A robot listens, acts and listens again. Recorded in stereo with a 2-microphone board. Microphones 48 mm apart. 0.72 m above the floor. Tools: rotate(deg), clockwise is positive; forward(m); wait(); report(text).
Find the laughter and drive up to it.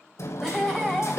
rotate(-30)
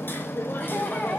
wait()
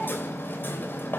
wait()
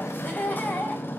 rotate(-145)
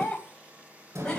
rotate(-20)
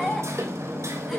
wait()
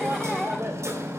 wait()
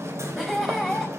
forward(1.0)
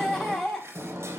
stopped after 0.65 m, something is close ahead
report("Something is in my way. I am facing the laughter but have not reached it.")